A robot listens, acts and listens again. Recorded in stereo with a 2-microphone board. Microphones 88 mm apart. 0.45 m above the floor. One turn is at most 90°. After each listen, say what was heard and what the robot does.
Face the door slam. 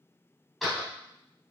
Turn 30° left.
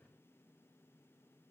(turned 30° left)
Keep listening.
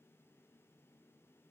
I heard a door slam, but can't make it out now. It was about 30° right or 150° left.